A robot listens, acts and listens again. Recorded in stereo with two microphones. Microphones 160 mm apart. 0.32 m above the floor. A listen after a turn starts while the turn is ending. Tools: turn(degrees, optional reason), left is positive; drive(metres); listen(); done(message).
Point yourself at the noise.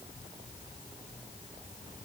listen()
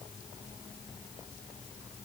listen()
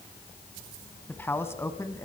turn(degrees=20, reason="The man speaking: about 20° left or 160° left.")
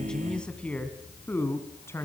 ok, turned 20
turn(degrees=15, reason="The man speaking: about 15° left or 165° left.")
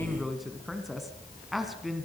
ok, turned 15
turn(degrees=30)
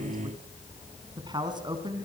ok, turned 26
turn(degrees=-25, reason="So it is at 25° right.")
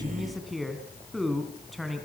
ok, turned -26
done("Facing the man speaking.")